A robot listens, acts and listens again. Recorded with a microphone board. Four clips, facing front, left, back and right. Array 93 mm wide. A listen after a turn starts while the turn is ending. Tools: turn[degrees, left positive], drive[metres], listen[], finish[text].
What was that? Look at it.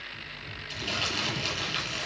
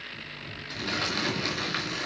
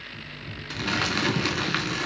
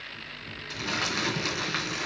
Thought: The crumpling: 170° right.
Action: turn[-170]
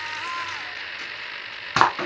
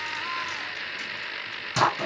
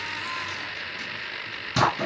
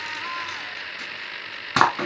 Thought: The crumpling is now 40° right.
Action: turn[-40]
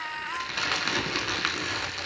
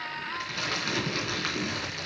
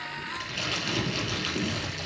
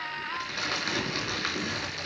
Action: finish[Facing the crumpling, 2 to 4 m away.]